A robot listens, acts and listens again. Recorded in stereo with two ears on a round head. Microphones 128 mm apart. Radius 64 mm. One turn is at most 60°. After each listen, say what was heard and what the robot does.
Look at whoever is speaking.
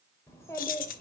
The child speaking: about 20° left or 160° left. Turn 20° left.
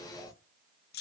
Keep listening.
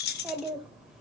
Found it: a child speaking, straight ahead, 1 to 2 m away.